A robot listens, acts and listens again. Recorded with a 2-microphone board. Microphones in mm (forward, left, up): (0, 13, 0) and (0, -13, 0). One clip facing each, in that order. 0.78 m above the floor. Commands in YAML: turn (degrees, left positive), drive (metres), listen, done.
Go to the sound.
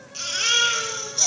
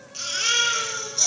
turn: 30
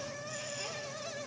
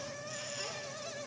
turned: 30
listen: true
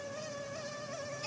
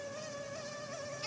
listen: true
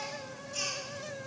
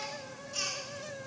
turn: -30
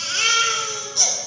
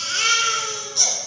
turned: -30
drive: 1.0
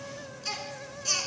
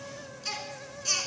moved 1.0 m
turn: -10
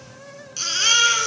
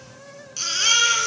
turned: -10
drive: 1.0
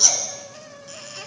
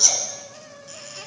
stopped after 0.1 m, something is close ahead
done: "Arrived at the baby crying, straight ahead."